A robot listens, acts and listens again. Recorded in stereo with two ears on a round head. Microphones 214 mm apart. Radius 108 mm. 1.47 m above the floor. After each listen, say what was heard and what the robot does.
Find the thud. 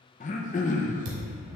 The thud: about 55° right or 125° right. Turn 55° right.
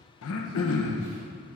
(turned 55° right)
Keep listening.
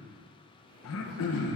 I heard a thud, but can't make it out now. It was about straight ahead or 70° right.